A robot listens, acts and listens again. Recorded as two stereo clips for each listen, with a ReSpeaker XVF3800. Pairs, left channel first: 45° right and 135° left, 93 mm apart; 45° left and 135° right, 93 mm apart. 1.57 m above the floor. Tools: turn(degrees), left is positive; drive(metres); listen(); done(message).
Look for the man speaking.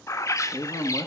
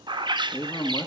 done("Facing the man speaking, 1 to 2 m away.")